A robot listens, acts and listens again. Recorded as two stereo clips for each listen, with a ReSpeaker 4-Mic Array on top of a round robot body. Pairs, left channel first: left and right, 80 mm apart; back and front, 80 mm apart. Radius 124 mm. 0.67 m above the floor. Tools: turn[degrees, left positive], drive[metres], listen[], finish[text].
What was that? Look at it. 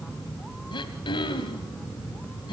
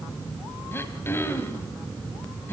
Thought: The throat clearing: 115° left.
Action: turn[115]
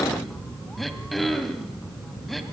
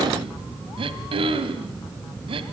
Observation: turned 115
Action: finish[Facing the throat clearing, 1 to 2 m away.]